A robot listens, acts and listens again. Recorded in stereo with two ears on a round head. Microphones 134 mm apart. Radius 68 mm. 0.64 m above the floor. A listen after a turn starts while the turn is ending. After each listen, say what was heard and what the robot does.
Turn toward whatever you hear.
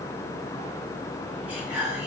Turn 30° right.
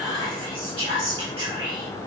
So it is at 140° right. Turn 140° right.
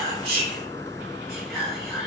Facing the whispering, 1 to 2 m away.